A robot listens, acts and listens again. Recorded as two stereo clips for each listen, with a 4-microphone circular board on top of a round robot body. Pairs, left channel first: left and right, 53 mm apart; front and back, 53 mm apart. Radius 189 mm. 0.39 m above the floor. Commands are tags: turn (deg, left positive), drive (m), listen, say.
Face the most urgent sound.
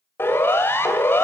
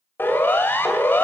<turn deg="50"/>
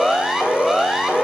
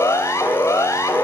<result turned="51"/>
<say>Facing the siren, 2 to 4 m away.</say>